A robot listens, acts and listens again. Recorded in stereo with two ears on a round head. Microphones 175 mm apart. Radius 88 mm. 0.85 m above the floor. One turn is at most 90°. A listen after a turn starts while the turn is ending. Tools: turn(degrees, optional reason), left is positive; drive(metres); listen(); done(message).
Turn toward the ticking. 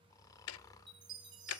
turn(degrees=90)
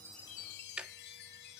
done("Found it: ticking, straight ahead.")